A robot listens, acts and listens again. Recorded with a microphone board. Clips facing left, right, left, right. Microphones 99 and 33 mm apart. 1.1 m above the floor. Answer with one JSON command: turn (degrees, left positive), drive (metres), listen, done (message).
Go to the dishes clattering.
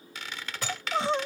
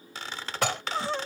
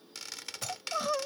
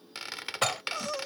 {"turn": -90}
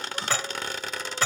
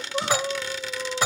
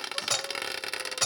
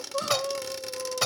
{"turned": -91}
{"turn": -15}
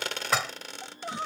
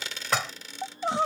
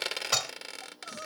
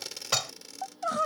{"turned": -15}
{"drive": 1.0}
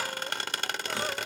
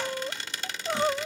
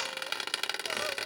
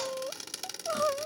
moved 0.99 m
{"listen": true}
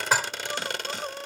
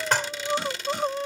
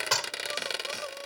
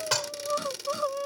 {"drive": 1.0}
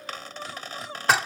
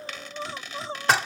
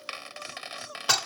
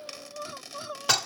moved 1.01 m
{"drive": 1.0}
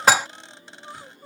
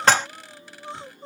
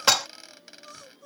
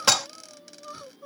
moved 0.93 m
{"turn": 10}
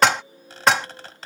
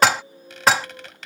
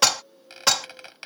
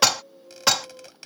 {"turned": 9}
{"drive": 1.0}
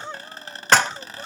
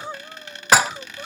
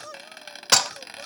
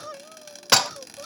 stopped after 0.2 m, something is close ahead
{"done": "Arrived at the dishes clattering, straight ahead."}